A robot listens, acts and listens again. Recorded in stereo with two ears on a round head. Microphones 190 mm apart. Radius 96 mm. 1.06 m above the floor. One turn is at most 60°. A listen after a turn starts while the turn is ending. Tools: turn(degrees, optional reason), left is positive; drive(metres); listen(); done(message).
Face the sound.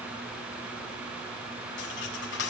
turn(degrees=55, reason="The cutlery clinking: about 55° left or 125° left.")
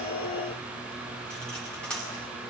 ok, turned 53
done("Facing the cutlery clinking, over 4 m away.")